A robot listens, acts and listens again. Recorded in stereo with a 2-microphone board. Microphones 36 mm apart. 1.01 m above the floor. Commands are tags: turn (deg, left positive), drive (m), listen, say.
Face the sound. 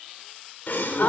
<turn deg="70"/>
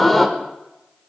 <turn deg="10"/>
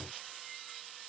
<say>I heard a gasp from this way, but can't make it out now.</say>